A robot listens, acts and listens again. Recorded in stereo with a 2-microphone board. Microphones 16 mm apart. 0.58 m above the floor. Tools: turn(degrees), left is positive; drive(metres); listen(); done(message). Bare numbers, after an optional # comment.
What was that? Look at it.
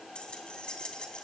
turn(90)
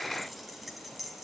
done("Facing the keys jangling, 2 to 4 m away.")